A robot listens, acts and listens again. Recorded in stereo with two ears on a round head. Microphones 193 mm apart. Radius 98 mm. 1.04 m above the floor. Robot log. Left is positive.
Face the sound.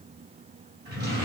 note: The drawer: about 50° right or 130° right.
cmd yaw -50
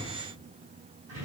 note: So it is at 75° right.
cmd yaw -75
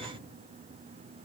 cmd idle
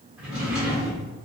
end: Found it: a drawer, straight ahead.